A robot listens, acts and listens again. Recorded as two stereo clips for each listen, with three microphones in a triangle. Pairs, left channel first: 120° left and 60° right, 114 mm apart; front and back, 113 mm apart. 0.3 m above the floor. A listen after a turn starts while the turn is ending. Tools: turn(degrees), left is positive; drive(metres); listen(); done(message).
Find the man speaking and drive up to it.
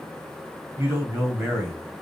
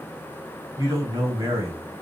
turn(degrees=-125)
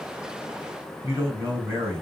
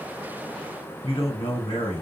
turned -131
drive(metres=1.0)
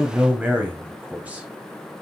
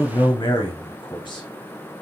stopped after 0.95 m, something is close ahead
turn(degrees=10)
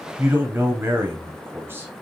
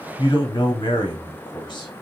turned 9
done("I am next to the man speaking.")